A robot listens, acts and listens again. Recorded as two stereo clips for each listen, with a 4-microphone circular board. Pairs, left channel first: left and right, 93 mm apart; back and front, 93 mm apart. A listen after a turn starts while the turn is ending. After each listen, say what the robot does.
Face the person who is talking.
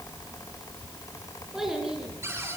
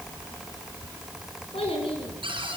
Turn 175° right.
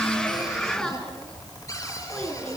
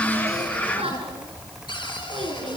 Turn 10° left.
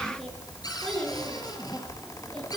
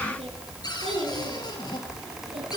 Found it: a child speaking, straight ahead, over 4 m away.